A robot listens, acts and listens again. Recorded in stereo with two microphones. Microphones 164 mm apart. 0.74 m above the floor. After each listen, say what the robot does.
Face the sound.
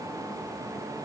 Keep listening.
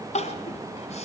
Turn 40° left.
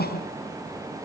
Turn 100° left.
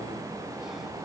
Keep listening.
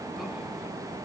Keep listening.
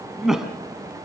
Facing the crying.